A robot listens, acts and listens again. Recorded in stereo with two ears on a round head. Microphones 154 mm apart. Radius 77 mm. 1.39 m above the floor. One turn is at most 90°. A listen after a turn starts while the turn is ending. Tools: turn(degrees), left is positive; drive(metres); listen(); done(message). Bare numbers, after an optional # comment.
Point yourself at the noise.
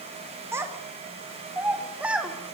turn(-30)
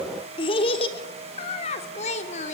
# So it is at 40° left.
turn(40)
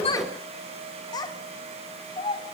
# The child speaking is now 30° left.
turn(30)
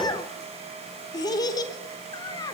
# The child speaking is now 25° left.
turn(25)
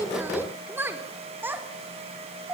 # The child speaking is now 10° right.
turn(-10)
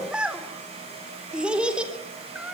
done("Found it: a child speaking, straight ahead.")